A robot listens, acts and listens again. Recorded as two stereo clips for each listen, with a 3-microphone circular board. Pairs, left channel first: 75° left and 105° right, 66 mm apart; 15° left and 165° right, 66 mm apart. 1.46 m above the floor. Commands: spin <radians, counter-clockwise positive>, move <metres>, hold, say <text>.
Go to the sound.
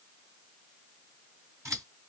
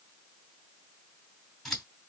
spin -1.31
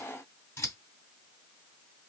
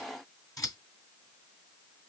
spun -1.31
spin 0.61
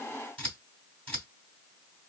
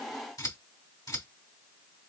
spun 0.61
move 1.0
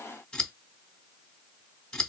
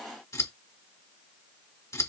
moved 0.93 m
move 1.0
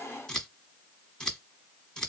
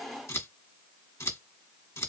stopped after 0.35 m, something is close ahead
say Arrived at the scissors, straight ahead.